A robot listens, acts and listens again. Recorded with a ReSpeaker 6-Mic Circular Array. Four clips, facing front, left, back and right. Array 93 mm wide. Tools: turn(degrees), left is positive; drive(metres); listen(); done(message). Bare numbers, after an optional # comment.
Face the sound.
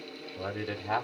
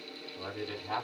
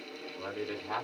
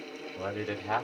# The man speaking: 55° right.
turn(-55)
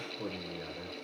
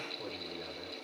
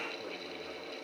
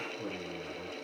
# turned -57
listen()
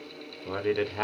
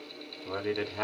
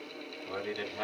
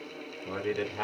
# The man speaking is now 10° left.
turn(10)
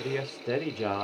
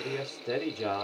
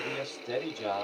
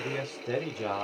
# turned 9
done("Found it: a man speaking, straight ahead.")